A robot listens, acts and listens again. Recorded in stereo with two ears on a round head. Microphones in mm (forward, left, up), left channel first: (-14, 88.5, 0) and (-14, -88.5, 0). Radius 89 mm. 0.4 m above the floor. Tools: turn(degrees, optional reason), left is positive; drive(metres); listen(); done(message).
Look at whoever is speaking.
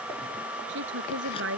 turn(degrees=-60, reason="The woman speaking: about 60° right or 120° right.")
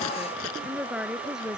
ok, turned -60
done("Found it: a woman speaking, straight ahead.")